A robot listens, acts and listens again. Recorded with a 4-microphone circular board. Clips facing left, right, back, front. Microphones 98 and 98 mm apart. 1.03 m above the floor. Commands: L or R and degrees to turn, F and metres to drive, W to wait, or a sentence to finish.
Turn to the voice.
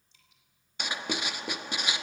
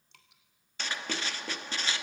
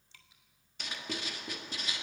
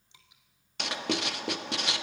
W
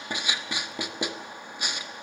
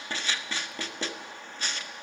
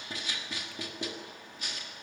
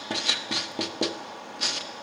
W
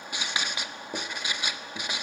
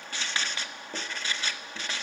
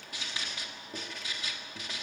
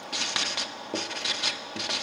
I can't make out anyone speaking to turn to.